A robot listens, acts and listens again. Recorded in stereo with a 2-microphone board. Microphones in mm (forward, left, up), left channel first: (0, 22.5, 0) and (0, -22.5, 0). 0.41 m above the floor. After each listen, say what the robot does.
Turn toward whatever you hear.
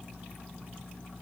Keep listening.
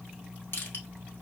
Turn 60° left.
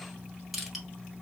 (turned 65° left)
Found it: crushing, straight ahead.